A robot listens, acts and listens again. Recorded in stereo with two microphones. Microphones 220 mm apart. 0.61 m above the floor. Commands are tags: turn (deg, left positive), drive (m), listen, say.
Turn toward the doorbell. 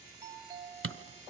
<turn deg="-15"/>
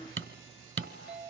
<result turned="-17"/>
<say>Facing the doorbell, 2 to 4 m away.</say>